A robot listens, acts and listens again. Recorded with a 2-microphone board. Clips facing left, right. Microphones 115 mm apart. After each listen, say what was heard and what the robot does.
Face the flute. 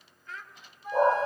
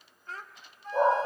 Turn 30° left.
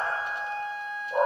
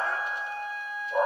So it is at 140° left. Turn 140° left.
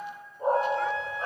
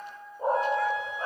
The flute is now 25° right. Turn 25° right.
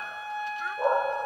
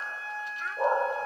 The flute is now 15° left. Turn 15° left.
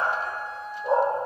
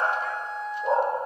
Found it: a flute, straight ahead, 2 to 4 m away.